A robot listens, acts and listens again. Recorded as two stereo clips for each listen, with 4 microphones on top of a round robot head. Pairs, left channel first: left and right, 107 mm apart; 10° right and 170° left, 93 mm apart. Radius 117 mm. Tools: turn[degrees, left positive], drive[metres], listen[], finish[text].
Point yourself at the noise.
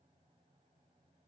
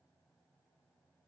Action: listen[]
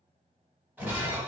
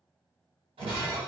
Thought: The breaking glass: 165° right.
Action: turn[-165]
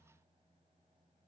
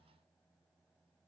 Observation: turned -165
Action: finish[Facing where the breaking glass came from. I can't hear it now.]